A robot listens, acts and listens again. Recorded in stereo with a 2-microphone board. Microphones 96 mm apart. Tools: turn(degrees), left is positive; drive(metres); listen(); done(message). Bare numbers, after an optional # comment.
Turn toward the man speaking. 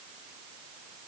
listen()
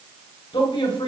# The man speaking: about 65° left or 115° left.
turn(65)
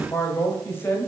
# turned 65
# So it is at 25° left.
turn(25)
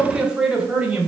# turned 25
# The man speaking is now 15° right.
turn(-15)
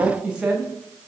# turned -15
# The man speaking is now 15° right.
turn(-15)
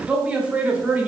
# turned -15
# The man speaking is now 10° right.
turn(-10)
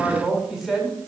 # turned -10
done("Found it: a man speaking, straight ahead.")